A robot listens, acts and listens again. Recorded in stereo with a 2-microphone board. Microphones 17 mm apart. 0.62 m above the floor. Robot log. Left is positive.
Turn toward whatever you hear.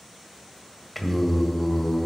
note: The singing: about 20° left or 160° left.
cmd yaw +20
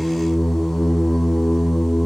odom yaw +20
note: So it is at 120° left.
cmd yaw +120
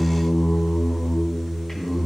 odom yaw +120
note: The singing is now 25° left.
cmd yaw +25
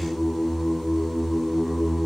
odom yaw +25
end: Found it: singing, straight ahead.